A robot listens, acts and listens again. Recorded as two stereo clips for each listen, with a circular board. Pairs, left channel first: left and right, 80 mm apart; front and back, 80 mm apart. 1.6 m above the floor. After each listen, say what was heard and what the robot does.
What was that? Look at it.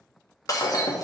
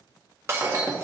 The breaking glass: 125° left. Turn 125° left.
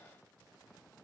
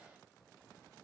Facing where the breaking glass came from. I can't hear it now.